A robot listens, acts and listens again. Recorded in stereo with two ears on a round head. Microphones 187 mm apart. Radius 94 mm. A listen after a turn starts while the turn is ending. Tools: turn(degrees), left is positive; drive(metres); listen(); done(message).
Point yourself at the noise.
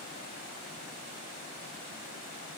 listen()
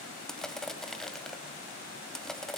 turn(degrees=30)
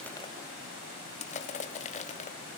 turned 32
turn(degrees=145)
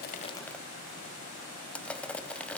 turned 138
done("Facing the crushing.")